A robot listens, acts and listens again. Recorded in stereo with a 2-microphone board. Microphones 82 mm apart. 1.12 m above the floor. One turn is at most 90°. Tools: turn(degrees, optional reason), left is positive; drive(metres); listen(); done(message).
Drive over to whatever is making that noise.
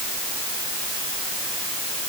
listen()
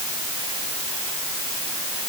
listen()
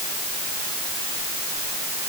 done("I can't make out anything to turn to.")